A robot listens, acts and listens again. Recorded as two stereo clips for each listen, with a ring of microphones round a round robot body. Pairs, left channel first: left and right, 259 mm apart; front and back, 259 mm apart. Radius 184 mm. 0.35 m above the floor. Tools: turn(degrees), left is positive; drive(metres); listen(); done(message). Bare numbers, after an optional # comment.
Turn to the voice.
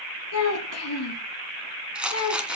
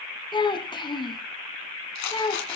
# The child speaking: 70° left.
turn(70)
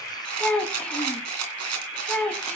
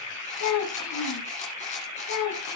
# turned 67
done("Found it: a child speaking, straight ahead.")